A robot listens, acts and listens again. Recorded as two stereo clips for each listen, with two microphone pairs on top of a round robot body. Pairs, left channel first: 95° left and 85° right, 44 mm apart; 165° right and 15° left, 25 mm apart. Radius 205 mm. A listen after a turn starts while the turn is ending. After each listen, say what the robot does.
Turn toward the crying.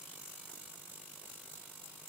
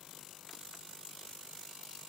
Keep listening.
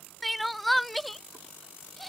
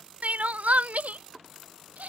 Found it: crying, straight ahead.